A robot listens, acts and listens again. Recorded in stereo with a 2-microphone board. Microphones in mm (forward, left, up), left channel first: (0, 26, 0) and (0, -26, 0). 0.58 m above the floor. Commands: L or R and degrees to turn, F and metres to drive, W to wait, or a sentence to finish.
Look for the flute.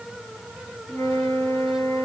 L90
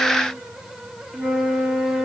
R10
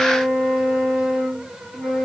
Found it: a flute, straight ahead.